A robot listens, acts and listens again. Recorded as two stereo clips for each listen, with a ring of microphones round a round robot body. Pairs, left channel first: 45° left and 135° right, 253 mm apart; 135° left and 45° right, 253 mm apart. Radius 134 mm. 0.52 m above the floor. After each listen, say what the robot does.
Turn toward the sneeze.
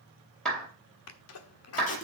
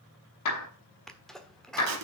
Turn 45° left.
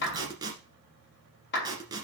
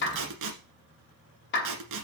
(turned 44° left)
I heard a sneeze from this way, but can't make it out now.